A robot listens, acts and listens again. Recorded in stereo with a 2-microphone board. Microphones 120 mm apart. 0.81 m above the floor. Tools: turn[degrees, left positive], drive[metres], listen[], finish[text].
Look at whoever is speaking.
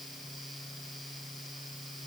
Action: listen[]
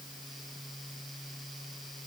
Action: listen[]
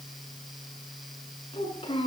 Thought: The child speaking: about 45° left or 135° left.
Action: turn[45]
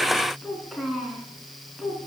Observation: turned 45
Action: finish[Facing the child speaking, over 4 m away.]